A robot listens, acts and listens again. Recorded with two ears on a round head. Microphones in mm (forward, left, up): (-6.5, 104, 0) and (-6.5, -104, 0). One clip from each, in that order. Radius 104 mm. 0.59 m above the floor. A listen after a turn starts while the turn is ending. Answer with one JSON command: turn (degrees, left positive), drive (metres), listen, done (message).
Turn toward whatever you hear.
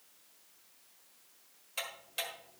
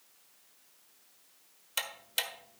{"turn": -45}
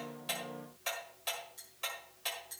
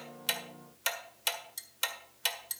{"turn": -85}
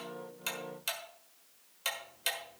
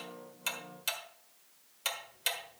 {"done": "Facing the ticking, 1 to 2 m away."}